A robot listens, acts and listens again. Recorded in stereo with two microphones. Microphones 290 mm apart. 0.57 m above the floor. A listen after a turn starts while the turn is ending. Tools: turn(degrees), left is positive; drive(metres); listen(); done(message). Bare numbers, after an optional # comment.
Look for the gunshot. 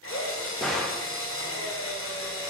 turn(30)
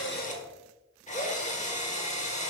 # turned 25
listen()
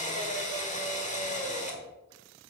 done("I heard a gunshot, but can't make it out now. It was about 25° right or 155° left.")